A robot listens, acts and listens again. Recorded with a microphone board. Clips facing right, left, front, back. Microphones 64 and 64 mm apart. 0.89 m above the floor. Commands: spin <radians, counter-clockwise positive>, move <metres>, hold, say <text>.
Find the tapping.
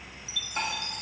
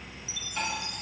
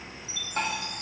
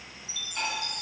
spin -0.61
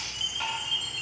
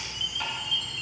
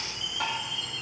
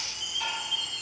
say Facing the tapping.